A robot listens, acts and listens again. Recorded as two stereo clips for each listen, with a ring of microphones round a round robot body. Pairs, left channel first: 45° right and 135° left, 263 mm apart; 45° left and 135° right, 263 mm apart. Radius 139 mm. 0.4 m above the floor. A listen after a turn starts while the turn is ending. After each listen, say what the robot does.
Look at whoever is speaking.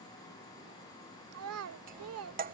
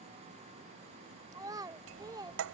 Turn 150° left.
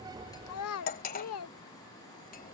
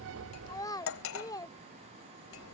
Turn 30° right.
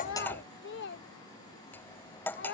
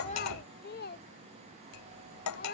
Found it: a child speaking, straight ahead.